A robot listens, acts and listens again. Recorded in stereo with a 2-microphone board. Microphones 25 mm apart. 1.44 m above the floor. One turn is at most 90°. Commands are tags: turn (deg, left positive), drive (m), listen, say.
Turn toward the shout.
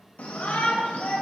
<turn deg="75"/>
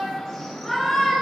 <turn deg="15"/>
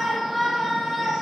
<say>Facing the shout, under 1 m away.</say>